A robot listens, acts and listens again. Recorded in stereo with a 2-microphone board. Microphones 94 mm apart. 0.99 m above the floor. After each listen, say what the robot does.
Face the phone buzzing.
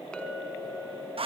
Keep listening.
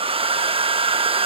Keep listening.
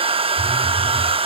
Turn 30° right.
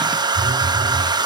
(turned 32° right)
Turn 145° right.
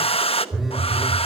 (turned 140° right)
Found it: a phone buzzing, straight ahead, over 4 m away.